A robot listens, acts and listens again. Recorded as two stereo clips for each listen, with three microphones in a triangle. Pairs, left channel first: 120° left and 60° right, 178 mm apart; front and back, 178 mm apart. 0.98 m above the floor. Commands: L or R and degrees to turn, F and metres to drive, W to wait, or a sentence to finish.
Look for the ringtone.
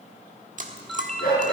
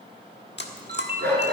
R150
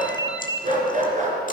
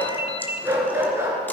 R55
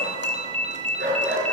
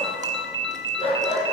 Found it: a ringtone, straight ahead.